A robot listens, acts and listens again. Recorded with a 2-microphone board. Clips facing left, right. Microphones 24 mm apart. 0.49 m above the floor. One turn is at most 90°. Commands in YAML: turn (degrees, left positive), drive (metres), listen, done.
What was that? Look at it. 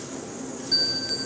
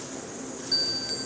turn: 30
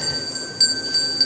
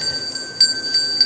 turn: -25
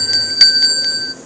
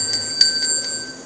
turn: 25
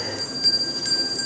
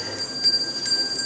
done: "Facing the bell, 1 to 2 m away."